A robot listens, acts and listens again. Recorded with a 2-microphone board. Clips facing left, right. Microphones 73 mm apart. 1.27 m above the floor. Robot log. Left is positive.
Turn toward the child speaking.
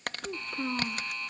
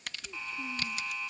cmd yaw +90
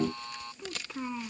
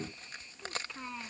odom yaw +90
note: So it is at 10° left.
cmd yaw +10
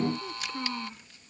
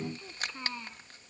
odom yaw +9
end: Found it: a child speaking, straight ahead.